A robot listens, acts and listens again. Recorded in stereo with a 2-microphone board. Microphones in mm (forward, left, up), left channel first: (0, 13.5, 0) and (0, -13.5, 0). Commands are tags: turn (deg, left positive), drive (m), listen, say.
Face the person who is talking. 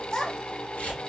<turn deg="25"/>
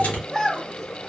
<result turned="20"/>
<say>Found it: a child speaking, straight ahead, under 1 m away.</say>